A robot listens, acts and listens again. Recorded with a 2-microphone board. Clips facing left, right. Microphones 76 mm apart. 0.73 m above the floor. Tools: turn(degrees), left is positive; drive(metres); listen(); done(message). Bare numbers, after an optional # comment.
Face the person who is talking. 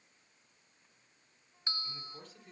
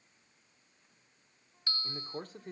# The man speaking: about 50° right or 130° right.
turn(-50)
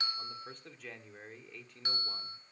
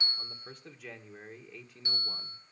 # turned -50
done("Facing the man speaking.")